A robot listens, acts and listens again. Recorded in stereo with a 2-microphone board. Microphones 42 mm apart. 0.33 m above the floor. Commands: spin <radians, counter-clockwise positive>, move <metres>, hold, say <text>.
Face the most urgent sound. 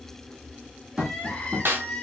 spin 0.52
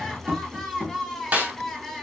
say Found it: crying, straight ahead.